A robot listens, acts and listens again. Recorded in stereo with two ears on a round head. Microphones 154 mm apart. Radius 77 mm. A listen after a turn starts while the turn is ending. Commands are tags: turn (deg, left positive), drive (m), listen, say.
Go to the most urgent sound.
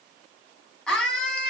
<turn deg="30"/>
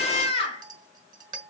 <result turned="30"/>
<turn deg="145"/>
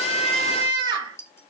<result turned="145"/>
<turn deg="-25"/>
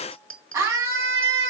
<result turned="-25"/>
<turn deg="-15"/>
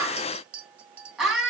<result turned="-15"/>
<drive m="1.0"/>
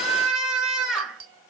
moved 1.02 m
<drive m="1.0"/>
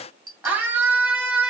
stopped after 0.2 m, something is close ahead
<turn deg="-10"/>
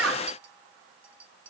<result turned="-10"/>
<listen/>
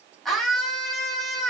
<say>Blocked. The scream is further on, straight ahead.</say>